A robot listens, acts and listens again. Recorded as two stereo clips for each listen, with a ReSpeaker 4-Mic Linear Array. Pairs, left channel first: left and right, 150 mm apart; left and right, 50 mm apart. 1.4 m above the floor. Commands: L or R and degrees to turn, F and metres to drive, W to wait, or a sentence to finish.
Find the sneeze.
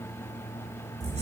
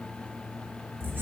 W
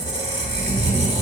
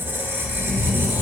W
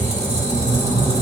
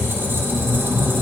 I can't make out a sneeze to turn to.